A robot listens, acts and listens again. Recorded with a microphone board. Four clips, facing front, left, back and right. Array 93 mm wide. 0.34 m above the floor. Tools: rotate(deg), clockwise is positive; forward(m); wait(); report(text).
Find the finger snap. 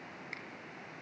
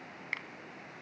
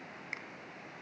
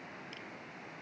rotate(-105)
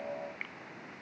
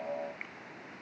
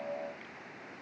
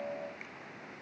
rotate(-30)
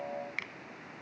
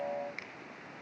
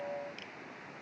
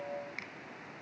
report("Found it: a finger snap, straight ahead.")